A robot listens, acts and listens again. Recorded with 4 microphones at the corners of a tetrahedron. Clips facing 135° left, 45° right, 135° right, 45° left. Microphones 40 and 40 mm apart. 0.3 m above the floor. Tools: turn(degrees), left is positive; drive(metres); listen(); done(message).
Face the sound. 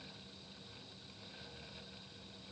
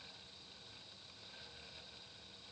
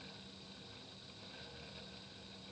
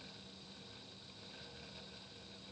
listen()
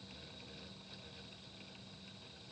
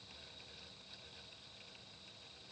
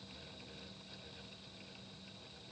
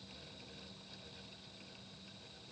listen()
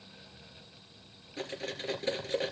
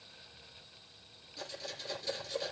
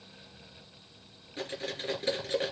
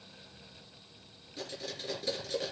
turn(degrees=175)
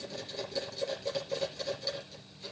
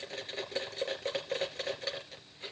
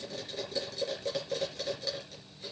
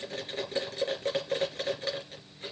done("Facing the cutlery clinking.")